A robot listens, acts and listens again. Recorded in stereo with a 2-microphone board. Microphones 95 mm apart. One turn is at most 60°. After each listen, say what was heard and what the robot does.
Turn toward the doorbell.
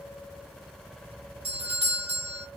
The doorbell: about 65° right or 115° right. Turn 60° right.
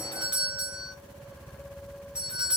So it is at 10° right. Turn 10° right.
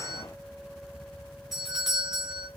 Facing the doorbell.